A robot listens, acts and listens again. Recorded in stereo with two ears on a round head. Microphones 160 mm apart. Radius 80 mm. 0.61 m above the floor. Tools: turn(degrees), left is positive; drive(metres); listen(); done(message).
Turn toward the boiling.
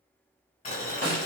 turn(degrees=40)
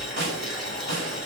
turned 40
done("Found it: boiling, straight ahead, 1 to 2 m away.")